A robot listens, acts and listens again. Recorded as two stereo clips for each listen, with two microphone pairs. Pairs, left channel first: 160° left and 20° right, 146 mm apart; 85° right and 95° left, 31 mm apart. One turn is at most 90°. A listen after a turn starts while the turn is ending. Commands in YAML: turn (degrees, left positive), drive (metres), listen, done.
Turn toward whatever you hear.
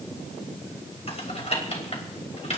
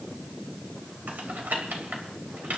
turn: 90
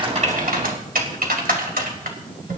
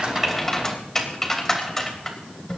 turn: -10
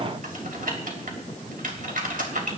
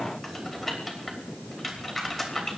done: "Facing the typing on a keyboard."